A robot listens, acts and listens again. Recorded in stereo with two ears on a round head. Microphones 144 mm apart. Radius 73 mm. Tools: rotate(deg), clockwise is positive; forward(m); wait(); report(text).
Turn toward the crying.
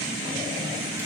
wait()
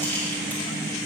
wait()
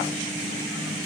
report("I can't make out crying to turn to.")